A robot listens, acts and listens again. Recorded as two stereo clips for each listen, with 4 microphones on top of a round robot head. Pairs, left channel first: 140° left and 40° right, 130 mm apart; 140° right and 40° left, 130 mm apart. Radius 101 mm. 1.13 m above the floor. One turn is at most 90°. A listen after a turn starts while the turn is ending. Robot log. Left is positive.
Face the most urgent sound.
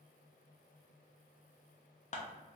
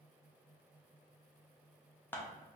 cmd idle
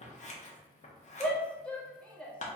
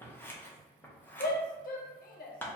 note: The shout: 140° right.
cmd yaw -90
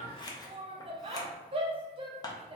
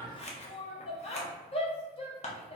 note: The shout is now 90° right.
cmd yaw -90
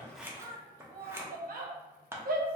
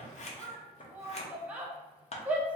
note: The shout is now 40° right.
cmd yaw -40
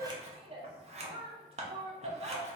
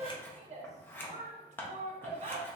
end: Facing the shout.